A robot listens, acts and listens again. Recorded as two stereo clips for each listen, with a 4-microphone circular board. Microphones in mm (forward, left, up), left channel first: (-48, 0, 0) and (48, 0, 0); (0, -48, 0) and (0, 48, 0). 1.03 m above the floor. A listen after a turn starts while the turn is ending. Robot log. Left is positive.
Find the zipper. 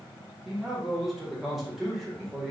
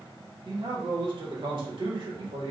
cmd idle
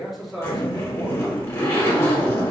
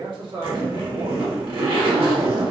note: The zipper: 120° left.
cmd yaw +120
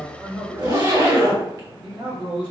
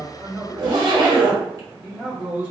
note: The zipper is now 45° left.
cmd yaw +45
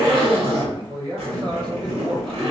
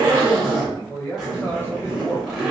end: Facing the zipper.